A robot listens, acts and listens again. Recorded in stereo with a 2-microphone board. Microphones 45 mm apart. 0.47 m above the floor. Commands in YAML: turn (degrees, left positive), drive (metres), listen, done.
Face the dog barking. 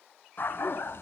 turn: 60
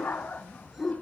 turn: 35
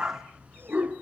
turn: -35
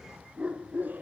turn: -30
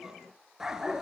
turn: -15
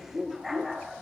done: "Facing the dog barking, 2 to 4 m away."